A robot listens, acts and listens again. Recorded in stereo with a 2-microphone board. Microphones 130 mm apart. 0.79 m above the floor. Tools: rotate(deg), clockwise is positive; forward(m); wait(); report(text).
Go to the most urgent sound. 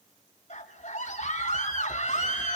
rotate(-55)
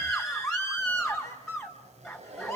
forward(1.0)
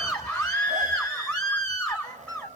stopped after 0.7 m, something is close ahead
rotate(-10)
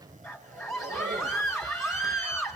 report("Something is in my way. I am facing the scream but have not reached it.")